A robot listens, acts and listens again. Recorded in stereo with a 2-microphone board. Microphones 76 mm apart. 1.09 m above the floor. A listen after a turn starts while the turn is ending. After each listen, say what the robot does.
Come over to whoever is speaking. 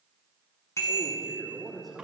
Turn 30° left.
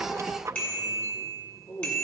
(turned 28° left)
Turn 150° left.
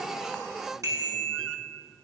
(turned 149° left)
Keep listening.
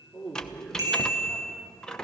Drive 1.0 m forward.
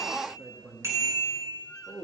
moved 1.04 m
Drive 1.0 m forward.
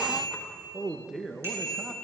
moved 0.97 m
Drive 1.0 m forward.
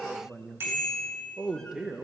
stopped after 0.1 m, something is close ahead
Turn 10° right.
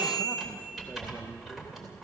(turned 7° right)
Keep listening.
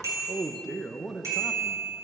I am next to the man speaking.